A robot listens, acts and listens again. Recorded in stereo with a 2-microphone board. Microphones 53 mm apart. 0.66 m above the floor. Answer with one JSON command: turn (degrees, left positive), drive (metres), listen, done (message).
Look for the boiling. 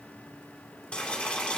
{"turn": 25}
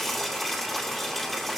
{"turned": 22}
{"done": "Found it: boiling, straight ahead, 2 to 4 m away."}